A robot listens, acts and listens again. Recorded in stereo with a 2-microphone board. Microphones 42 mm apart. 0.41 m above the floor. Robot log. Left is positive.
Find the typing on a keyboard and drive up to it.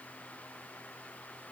cmd idle
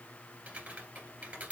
note: The typing on a keyboard: about 35° right or 145° right.
cmd yaw -35
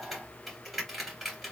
cmd fwd 1.0
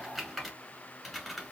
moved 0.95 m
cmd fwd 1.0
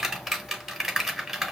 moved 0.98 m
note: The typing on a keyboard is now 10° right.
cmd yaw -10
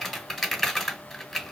cmd fwd 1.0
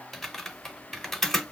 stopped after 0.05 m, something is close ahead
end: Arrived at the typing on a keyboard, straight ahead.